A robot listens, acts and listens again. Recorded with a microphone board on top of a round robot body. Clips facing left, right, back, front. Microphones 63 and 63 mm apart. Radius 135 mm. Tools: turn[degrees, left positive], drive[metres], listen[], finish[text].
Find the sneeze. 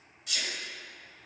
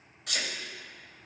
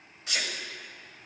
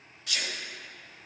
Thought: The sneeze: 115° right.
Action: turn[-115]
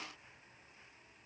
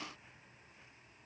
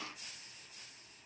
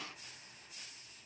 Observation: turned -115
Action: finish[I heard a sneeze from this way, but can't make it out now.]